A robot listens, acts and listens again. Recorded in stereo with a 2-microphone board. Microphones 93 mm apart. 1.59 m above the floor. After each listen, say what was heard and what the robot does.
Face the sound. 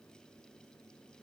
Keep listening.
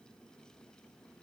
Keep listening.
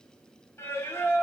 The singing: about 30° left or 150° left. Turn 30° left.
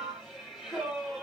Facing the singing, 1 to 2 m away.